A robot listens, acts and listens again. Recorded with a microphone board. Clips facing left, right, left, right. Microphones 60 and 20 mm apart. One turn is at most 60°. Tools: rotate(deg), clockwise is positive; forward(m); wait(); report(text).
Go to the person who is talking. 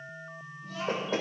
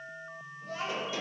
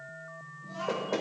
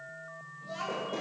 rotate(55)
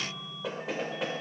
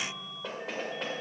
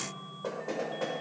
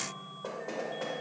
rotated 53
wait()
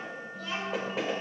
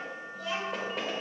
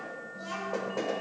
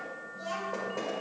forward(1.0)
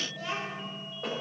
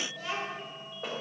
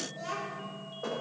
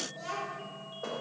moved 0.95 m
forward(1.0)
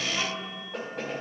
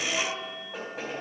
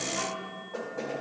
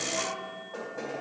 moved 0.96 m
forward(1.0)
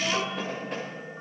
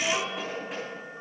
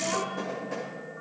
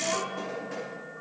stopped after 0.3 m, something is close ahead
report("Arrived at the child speaking, straight ahead.")